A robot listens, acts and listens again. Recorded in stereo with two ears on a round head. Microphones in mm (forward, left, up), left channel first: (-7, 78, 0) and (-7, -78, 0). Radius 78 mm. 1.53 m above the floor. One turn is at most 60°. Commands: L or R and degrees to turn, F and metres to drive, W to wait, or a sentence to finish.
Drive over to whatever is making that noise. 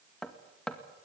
L30
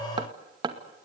R25
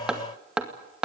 F1.0
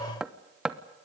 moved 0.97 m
F1.0
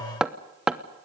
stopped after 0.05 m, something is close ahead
I am next to the hammering.